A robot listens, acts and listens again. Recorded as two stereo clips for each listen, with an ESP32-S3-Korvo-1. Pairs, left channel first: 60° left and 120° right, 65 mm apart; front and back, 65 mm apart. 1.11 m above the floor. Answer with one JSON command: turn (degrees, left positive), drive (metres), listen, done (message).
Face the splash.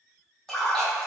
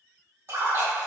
{"turn": 140}
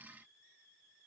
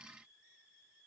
{"done": "I heard a splash from this way, but can't make it out now."}